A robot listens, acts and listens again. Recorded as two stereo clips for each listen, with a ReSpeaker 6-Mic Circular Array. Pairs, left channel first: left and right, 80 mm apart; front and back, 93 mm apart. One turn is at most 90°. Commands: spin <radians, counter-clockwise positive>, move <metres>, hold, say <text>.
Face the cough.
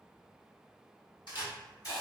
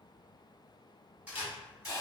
hold
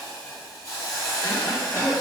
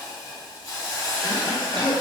spin 1.57
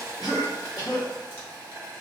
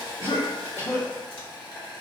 spin 1.13
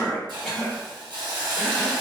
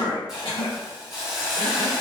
say Found it: a cough, straight ahead, 1 to 2 m away.